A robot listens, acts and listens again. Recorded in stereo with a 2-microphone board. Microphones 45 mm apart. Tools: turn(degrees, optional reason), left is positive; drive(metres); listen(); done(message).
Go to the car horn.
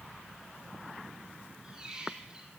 listen()
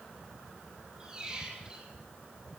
listen()
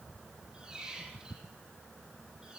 done("I can't make out a car horn to turn to.")